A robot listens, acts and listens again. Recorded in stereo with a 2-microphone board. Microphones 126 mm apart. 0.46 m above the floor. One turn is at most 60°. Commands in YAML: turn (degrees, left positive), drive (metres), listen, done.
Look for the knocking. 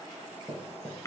turn: 30
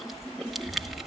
listen: true
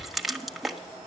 listen: true
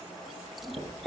done: "I heard knocking, but can't make it out now. It was about 30° right or 150° left."